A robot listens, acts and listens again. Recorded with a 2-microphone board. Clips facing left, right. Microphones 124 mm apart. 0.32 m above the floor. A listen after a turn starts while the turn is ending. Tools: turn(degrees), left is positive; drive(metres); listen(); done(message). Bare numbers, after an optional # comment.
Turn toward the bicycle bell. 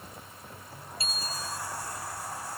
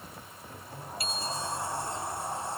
# The bicycle bell: about 30° left or 150° left.
turn(30)
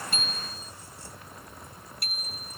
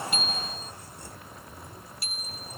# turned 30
# So it is at 120° left.
turn(120)
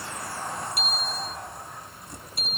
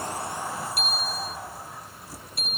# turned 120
done("Facing the bicycle bell.")